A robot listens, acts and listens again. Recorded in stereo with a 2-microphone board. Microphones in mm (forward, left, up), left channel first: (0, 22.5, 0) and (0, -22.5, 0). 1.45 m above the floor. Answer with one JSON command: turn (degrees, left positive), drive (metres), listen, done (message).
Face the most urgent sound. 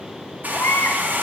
{"turn": 65}
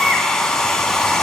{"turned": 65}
{"done": "Facing the baby crying, 1 to 2 m away."}